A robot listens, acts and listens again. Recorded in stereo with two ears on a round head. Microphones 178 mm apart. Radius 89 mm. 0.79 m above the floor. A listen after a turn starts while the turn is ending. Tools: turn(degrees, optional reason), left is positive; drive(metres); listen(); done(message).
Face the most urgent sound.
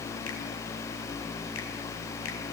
listen()
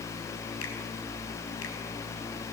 listen()
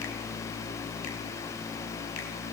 done("I can't make out anything urgent to turn to.")